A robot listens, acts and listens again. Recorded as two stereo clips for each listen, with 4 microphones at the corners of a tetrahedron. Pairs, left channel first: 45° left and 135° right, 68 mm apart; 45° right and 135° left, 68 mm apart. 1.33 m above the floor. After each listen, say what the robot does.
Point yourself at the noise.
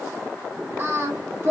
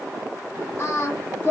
Turn 95° right.
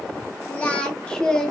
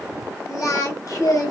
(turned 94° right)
Turn 35° right.
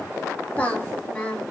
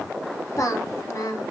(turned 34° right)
Turn 30° right.
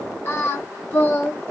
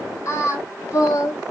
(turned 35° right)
Turn 15° right.
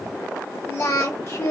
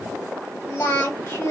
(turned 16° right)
Facing the singing.